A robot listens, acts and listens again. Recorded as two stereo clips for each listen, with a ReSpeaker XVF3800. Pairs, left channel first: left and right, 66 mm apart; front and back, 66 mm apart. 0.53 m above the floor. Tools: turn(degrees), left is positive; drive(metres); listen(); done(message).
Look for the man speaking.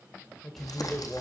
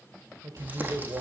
turn(degrees=180)
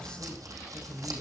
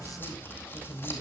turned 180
turn(degrees=20)
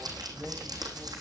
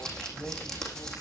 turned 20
listen()
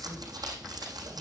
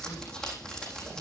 listen()
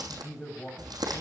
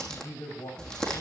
turn(degrees=10)
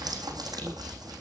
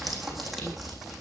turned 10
listen()
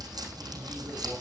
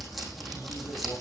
listen()
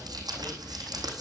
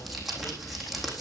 done("I heard a man speaking from this way, but can't make it out now.")